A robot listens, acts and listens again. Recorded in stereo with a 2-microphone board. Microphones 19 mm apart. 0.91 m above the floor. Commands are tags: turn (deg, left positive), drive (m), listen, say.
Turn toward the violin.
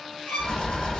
<turn deg="65"/>
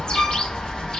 <listen/>
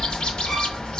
<listen/>
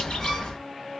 <say>I heard a violin, but can't make it out now. It was about straight ahead or 50° left.</say>